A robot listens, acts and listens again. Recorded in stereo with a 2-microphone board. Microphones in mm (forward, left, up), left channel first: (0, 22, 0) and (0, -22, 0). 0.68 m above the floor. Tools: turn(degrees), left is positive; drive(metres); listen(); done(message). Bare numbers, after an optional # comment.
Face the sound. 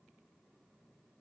listen()
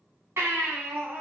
turn(-90)
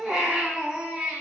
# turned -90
done("Found it: a baby crying, straight ahead.")